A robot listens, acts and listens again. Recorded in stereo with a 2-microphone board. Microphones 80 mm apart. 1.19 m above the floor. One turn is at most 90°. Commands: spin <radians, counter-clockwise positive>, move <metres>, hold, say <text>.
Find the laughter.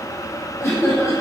spin 0.61
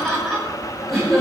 say Facing the laughter.